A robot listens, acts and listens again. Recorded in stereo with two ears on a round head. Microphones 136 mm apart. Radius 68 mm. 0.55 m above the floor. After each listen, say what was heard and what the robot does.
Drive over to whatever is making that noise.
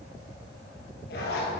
The zipper: about 70° left or 110° left. Turn 70° left.
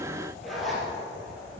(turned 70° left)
Drive 1.0 m forward.
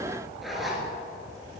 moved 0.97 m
Drive 1.0 m forward.
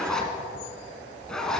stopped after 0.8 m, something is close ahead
I am next to the zipper.